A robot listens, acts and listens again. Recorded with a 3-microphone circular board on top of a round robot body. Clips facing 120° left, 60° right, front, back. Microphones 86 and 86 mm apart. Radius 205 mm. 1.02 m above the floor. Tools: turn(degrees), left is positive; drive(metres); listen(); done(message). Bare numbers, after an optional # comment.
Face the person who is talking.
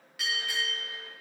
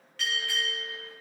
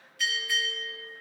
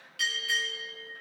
listen()
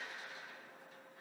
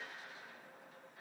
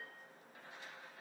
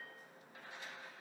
listen()
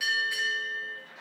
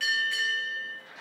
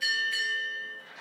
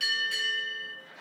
done("I can't make out anyone speaking to turn to.")